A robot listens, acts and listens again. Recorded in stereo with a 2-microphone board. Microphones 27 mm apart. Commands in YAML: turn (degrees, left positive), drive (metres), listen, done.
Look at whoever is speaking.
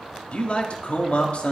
turn: 55
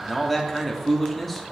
done: "Found it: a man speaking, straight ahead, 1 to 2 m away."